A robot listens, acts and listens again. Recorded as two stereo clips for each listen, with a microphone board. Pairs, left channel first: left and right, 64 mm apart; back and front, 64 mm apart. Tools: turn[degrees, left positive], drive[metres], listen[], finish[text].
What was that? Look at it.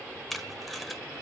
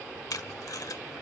Thought: The tape being pulled: straight behind.
Action: turn[180]
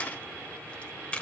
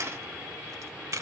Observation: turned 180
Thought: The tape being pulled is now 25° left.
Action: turn[25]
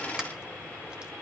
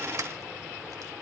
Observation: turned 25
Action: listen[]
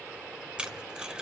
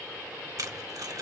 Thought: The tape being pulled is now 15° right.
Action: turn[-15]
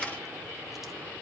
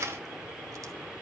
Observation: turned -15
Action: listen[]
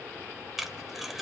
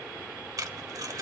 Action: finish[Found it: tape being pulled, straight ahead.]